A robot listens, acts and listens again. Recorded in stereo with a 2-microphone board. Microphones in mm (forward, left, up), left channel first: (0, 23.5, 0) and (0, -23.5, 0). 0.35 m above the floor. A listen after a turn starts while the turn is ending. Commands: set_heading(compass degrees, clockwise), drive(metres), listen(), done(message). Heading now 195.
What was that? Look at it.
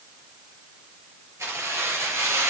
set_heading(285)
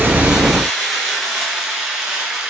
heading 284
set_heading(299)
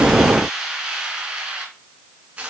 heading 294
set_heading(319)
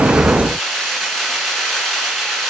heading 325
done("Found it: keys jangling, straight ahead, 2 to 4 m away.")